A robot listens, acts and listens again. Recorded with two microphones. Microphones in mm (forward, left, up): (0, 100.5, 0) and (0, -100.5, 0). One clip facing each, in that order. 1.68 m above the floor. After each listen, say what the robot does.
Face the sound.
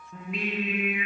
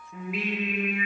Turn 30° left.
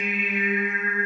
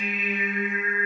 Turn 115° left.
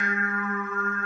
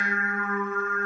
Turn 60° right.
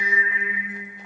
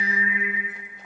Turn 10° right.
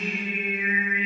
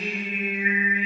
Turn 10° right.
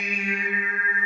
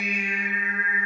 Facing the singing, 2 to 4 m away.